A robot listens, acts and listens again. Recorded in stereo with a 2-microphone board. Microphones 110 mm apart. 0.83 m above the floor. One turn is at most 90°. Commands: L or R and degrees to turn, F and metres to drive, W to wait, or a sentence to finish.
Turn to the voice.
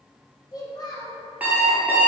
L35
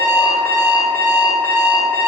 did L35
W
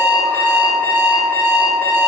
W
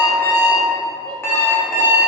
I heard a child speaking, but can't make it out now. It was about straight ahead or 110° left.